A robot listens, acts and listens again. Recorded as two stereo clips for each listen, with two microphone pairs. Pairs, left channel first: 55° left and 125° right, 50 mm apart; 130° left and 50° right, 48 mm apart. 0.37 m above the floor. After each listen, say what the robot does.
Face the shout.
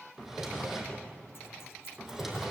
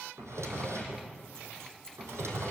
Keep listening.
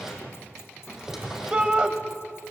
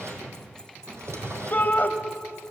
Turn 170° left.
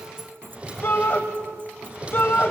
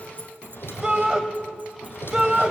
Turn 20° left.
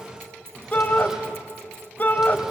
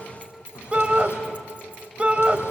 Turn 10° left.
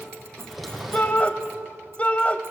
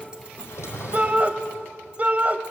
Facing the shout.